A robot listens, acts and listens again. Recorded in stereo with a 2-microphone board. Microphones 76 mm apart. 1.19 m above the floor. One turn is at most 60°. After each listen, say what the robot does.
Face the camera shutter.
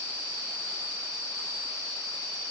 Keep listening.
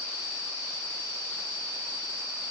Keep listening.
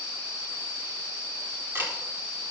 Turn 30° right.
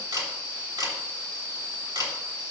Turn 60° right.
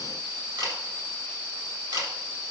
Turn 60° right.
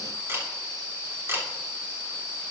Turn 35° right.
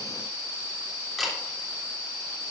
Found it: a camera shutter, straight ahead, 2 to 4 m away.